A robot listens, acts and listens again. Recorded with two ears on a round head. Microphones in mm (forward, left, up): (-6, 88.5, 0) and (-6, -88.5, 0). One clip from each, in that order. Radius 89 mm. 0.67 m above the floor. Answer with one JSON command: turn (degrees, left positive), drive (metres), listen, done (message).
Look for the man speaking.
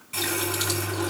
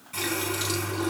{"listen": true}
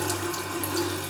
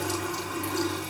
{"listen": true}
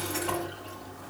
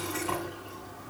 {"done": "I can't make out a man speaking to turn to."}